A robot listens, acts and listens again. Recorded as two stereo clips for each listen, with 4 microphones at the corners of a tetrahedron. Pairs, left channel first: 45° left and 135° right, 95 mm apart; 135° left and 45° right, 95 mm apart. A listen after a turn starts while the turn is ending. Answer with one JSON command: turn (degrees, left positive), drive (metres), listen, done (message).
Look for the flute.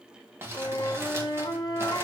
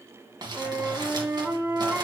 {"turn": 20}
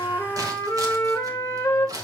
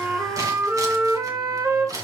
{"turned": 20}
{"done": "Facing the flute, 1 to 2 m away."}